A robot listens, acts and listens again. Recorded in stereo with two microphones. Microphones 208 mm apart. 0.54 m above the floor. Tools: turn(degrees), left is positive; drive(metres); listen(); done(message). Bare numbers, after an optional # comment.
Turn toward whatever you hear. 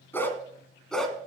turn(30)
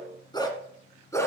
turn(30)
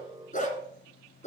# So it is at 145° left.
turn(145)
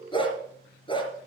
# The dog barking is now 25° left.
turn(25)
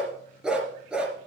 done("Facing the dog barking, 2 to 4 m away.")